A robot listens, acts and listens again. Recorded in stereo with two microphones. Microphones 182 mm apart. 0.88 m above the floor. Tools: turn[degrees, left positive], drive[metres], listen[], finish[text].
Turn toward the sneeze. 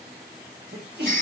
Thought: The sneeze: about 65° right or 115° right.
Action: turn[-65]
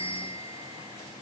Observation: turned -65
Action: listen[]
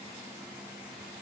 Action: finish[I heard a sneeze, but can't make it out now. It was about straight ahead or 50° right.]